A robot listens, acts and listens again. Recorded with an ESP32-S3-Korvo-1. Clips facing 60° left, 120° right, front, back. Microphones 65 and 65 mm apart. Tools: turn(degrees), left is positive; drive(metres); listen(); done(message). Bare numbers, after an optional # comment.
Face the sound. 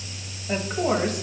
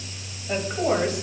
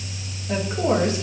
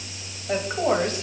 # The woman speaking: 155° left.
turn(155)
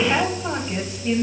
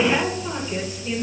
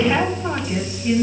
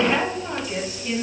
# The woman speaking is now 65° left.
turn(65)
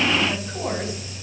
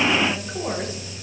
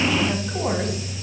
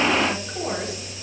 # The woman speaking is now 10° right.
turn(-10)
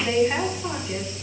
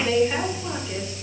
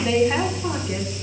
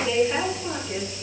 done("Found it: a woman speaking, straight ahead, 2 to 4 m away.")